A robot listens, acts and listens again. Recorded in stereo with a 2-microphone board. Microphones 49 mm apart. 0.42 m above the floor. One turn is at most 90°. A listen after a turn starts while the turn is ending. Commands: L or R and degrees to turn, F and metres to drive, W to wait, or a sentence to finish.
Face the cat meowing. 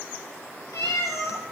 L90
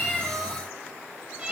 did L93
R20
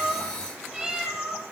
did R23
Found it: a cat meowing, straight ahead, over 4 m away.